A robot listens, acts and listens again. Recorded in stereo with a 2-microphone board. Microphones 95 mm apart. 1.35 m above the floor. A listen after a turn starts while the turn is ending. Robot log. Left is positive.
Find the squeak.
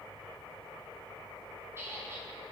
note: The squeak: about 25° right or 155° right.
cmd yaw -25
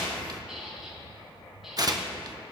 end: Found it: a squeak, straight ahead.